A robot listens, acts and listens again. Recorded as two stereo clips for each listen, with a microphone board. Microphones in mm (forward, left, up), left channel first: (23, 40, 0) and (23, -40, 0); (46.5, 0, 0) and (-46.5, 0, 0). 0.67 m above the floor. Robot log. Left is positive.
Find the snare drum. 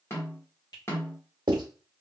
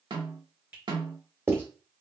note: The snare drum: 145° left.
cmd yaw +145
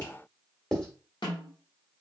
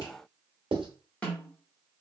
note: The snare drum is now 75° left.
cmd yaw +75
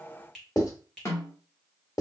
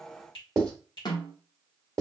note: The snare drum is now 35° left.
cmd yaw +35
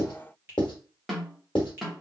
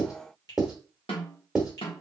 end: Facing the snare drum.